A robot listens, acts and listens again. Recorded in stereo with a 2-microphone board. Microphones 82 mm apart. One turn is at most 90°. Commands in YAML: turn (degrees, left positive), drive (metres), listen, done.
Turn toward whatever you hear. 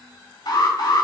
turn: 70
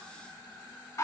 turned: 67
turn: 40
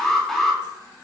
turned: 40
done: "Facing the alarm."